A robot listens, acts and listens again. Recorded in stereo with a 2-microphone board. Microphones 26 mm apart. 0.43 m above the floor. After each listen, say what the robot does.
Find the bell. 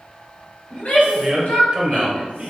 Keep listening.
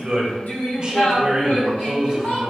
Keep listening.
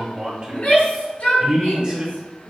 I can't make out a bell, only a man speaking and a shout.